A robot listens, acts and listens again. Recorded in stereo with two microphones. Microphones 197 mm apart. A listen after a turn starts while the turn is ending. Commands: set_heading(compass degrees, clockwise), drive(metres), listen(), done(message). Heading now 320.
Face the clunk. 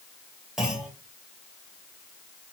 set_heading(350)
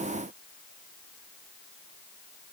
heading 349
listen()
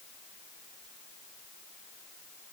done("I heard a clunk, but can't make it out now. It was about 25° left or 150° right.")